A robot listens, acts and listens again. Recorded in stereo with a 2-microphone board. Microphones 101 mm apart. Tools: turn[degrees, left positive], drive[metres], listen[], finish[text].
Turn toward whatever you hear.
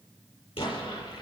Thought: The explosion: about 70° left or 110° left.
Action: turn[70]
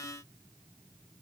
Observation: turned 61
Action: listen[]
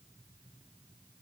Action: finish[I heard an explosion, but can't make it out now. It was about 10° left or 50° left.]